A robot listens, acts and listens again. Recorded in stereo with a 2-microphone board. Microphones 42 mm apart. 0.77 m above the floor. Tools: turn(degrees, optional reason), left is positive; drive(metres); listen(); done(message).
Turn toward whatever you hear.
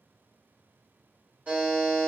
turn(degrees=-35, reason="The buzzer: about 35° right or 145° right.")
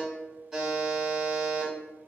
done("Found it: a buzzer, straight ahead.")